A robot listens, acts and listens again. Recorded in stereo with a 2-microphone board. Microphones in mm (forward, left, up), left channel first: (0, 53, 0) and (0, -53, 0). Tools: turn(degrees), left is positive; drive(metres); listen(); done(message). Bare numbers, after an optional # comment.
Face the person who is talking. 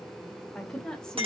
turn(30)
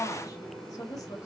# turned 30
# So it is at 140° left.
turn(140)
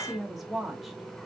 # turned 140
done("Found it: a woman speaking, straight ahead.")